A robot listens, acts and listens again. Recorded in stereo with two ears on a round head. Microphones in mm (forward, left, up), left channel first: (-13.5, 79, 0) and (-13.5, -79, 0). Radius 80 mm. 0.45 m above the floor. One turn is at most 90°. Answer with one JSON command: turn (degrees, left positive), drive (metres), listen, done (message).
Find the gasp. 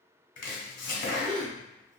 {"turn": 30}
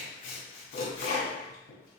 {"listen": true}
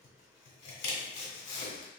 {"done": "I heard a gasp, but can't make it out now. It was about 30° right or 150° left."}